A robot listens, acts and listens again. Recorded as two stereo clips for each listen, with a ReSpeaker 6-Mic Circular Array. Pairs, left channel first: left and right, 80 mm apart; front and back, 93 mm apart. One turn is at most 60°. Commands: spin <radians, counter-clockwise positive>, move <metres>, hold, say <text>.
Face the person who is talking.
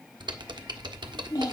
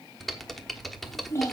spin 1.05
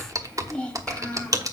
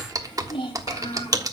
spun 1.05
spin 0.26
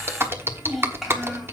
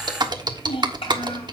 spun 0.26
hold
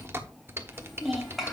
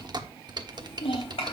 say Facing the child speaking.